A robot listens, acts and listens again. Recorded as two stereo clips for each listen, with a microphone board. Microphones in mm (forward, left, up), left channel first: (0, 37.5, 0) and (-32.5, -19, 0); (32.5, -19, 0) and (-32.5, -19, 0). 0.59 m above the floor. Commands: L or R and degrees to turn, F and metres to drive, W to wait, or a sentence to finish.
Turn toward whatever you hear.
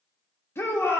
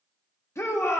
L25
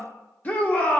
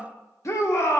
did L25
Facing the shout.